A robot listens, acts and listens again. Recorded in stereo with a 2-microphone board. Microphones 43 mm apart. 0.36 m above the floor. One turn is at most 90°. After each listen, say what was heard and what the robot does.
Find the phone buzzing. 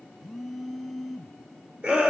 Turn 30° left.
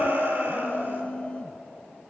So it is at 150° left. Turn 90° left.
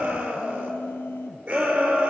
The phone buzzing is now 60° left. Turn 60° left.
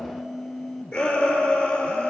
Facing the phone buzzing, under 1 m away.